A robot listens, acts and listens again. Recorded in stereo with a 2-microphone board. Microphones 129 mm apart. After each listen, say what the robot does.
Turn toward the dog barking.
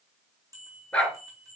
Turn 30° left.
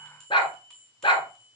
Turn 140° left.
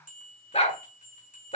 Turn 55° left.
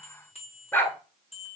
Turn 15° left.
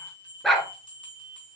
Facing the dog barking, 1 to 2 m away.